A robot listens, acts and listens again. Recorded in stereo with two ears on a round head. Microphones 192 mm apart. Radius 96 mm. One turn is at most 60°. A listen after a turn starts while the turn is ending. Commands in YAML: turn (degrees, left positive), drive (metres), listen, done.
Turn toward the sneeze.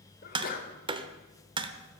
turn: 45
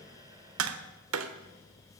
listen: true
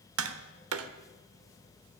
done: "I heard a sneeze, but can't make it out now. It was about straight ahead or 90° left."